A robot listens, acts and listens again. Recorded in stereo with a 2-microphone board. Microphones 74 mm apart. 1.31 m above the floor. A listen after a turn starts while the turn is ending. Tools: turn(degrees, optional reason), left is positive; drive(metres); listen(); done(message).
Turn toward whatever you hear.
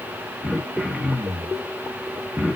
turn(degrees=-30)
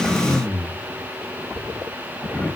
turn(degrees=25, reason="So it is at 25° left.")
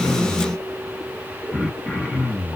done("Facing the throat clearing, 1 to 2 m away.")